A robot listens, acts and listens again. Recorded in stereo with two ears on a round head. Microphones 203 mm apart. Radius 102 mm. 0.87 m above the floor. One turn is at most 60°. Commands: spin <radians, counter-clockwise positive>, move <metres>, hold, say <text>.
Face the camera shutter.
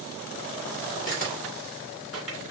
spin 0.61
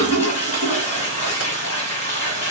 hold
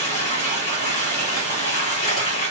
hold
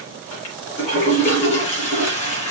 say I heard a camera shutter, but can't make it out now. It was about straight ahead or 110° left.